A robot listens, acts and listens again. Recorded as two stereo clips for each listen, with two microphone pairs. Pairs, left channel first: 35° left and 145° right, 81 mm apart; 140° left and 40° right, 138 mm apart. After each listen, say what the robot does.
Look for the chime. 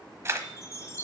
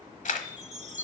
Turn 10° right.
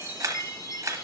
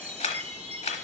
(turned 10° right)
Found it: a chime, straight ahead.